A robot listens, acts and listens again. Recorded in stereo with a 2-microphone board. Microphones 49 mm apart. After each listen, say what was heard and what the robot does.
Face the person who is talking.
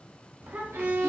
The child speaking: about 40° right or 140° right. Turn 40° right.
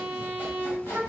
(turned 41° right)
So it is at 90° right. Turn 90° right.
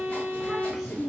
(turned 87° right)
Facing the child speaking, 1 to 2 m away.